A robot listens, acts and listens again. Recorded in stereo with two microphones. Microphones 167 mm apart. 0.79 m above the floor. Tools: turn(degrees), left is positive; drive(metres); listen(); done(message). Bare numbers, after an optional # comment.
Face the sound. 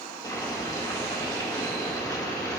# The boiling: about 25° left or 155° left.
turn(25)
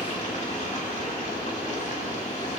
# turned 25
# So it is at 130° left.
turn(130)
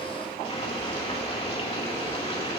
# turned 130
# The boiling is now 40° left.
turn(40)
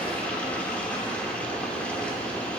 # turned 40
# The boiling is now 10° left.
turn(10)
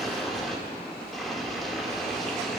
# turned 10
done("Facing the boiling.")